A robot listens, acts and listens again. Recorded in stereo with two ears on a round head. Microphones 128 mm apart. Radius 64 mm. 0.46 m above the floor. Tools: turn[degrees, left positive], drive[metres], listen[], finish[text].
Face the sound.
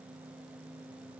Action: listen[]
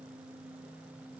Action: listen[]
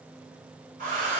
Thought: The hair dryer: about 55° right or 125° right.
Action: turn[-55]
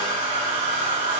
Thought: So it is at 60° right.
Action: turn[-60]
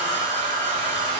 Thought: The hair dryer is now 35° right.
Action: turn[-35]
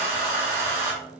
Thought: The hair dryer is now 20° right.
Action: turn[-20]
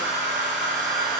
Action: finish[Found it: a hair dryer, straight ahead.]